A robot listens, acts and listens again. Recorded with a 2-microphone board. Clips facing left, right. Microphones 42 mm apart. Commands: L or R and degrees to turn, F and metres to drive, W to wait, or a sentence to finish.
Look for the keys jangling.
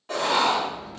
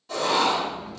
R30
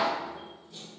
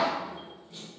R150
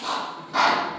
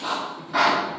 W
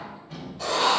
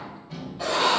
L15
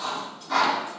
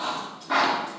W
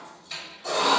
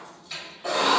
Found it: keys jangling, straight ahead, 2 to 4 m away.